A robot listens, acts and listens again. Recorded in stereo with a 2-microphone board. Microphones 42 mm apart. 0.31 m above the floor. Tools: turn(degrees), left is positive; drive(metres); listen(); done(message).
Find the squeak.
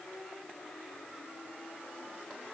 listen()
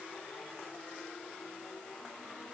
listen()
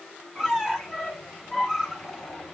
turn(degrees=-15)
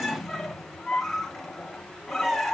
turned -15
done("Found it: a squeak, straight ahead.")